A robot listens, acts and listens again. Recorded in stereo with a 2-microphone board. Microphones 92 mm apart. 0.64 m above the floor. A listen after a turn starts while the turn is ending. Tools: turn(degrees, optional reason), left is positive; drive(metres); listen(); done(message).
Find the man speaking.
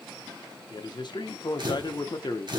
turn(degrees=60, reason="The man speaking: about 60° left or 120° left.")
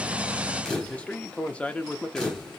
turn(degrees=15, reason="So it is at 15° left.")
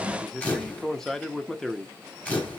done("Found it: a man speaking, straight ahead.")